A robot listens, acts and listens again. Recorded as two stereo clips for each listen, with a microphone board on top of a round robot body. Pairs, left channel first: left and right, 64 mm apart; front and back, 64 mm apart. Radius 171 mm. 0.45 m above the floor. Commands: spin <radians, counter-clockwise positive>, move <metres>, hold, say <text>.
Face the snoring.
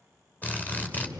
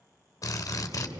spin -2.71
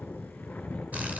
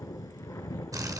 spin 0.44
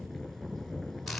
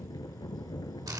say Found it: snoring, straight ahead.